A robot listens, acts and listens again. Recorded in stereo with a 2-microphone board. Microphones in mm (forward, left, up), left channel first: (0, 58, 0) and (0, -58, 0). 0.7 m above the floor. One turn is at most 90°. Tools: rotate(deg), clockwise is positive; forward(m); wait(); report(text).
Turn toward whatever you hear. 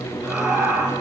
rotate(30)
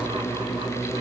wait()
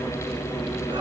wait()
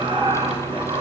rotate(90)
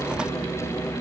rotate(45)
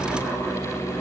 wait()
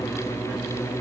report("Facing where the laughter came from. I can't hear it now.")